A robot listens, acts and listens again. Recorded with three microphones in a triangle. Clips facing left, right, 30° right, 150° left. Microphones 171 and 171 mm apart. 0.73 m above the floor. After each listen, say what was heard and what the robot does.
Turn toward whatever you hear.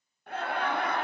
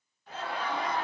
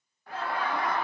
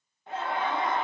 The laughter: 85° left. Turn 85° left.
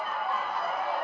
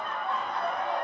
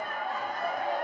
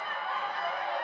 Found it: laughter, straight ahead, under 1 m away.